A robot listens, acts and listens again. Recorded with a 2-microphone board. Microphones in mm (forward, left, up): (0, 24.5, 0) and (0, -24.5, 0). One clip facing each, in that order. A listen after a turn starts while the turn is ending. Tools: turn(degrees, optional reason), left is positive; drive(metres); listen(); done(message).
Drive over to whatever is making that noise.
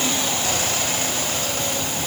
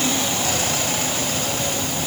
listen()
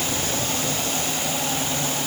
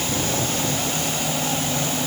listen()
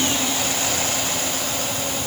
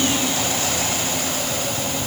done("I can't make out anything.")